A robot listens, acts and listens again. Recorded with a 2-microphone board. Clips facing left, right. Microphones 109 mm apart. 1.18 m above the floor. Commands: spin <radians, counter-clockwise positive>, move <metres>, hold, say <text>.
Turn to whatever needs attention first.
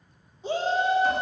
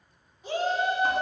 spin 0.44
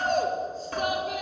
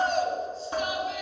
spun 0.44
spin 2.18
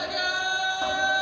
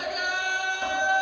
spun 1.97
spin 0.17
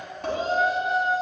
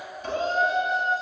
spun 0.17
say Facing the shout.